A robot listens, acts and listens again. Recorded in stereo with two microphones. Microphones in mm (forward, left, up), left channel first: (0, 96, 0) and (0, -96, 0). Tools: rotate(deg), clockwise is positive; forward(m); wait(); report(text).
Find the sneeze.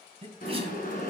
rotate(30)
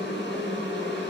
wait()
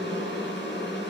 report("I heard a sneeze, but can't make it out now. It was about straight ahead or 120° right.")